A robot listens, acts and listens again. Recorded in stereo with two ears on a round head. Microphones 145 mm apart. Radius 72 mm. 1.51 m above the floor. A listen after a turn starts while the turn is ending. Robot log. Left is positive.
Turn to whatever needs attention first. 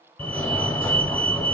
note: The fire alarm: about 15° left or 165° left.
cmd yaw +15
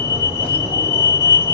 note: So it is at 150° left.
cmd yaw +150
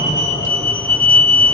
note: The fire alarm is now 10° left.
cmd yaw +10
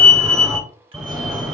end: Found it: a fire alarm, straight ahead.